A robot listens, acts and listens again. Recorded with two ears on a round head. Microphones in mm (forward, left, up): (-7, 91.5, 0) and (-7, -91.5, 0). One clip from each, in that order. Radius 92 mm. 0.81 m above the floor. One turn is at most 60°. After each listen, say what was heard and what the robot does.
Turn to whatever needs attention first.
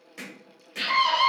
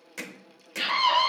The scream: about 20° left or 160° left. Turn 20° left.
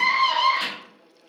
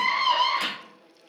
So it is at 130° left. Turn 60° left.
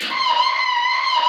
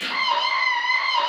The scream is now 70° left. Turn 60° left.
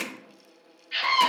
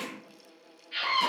The scream is now 30° left. Turn 30° left.
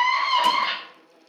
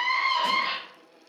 Found it: a scream, straight ahead.